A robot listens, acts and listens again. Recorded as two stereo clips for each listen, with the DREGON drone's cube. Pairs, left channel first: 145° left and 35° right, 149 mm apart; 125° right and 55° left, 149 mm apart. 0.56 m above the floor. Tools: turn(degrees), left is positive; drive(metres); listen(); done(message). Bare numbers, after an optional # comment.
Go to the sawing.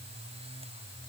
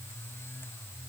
listen()
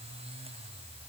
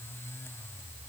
listen()
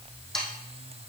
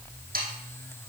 # The sawing: 60° left.
turn(60)
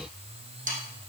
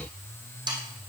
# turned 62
drive(1.0)
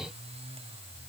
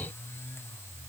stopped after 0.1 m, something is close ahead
listen()
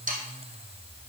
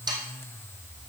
done("Something is in my way. I am facing the sawing but have not reached it.")